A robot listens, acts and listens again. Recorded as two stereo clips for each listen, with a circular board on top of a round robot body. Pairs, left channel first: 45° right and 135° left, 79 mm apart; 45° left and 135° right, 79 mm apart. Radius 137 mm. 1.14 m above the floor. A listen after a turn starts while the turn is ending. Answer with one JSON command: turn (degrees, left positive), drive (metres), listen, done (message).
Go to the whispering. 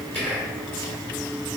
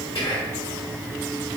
{"turn": 30}
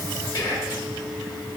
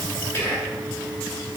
{"turn": -15}
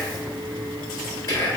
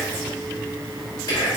{"drive": 1.0}
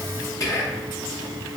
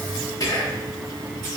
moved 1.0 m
{"drive": 1.0}
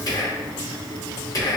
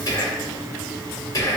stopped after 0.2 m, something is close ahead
{"done": "I am next to the whispering."}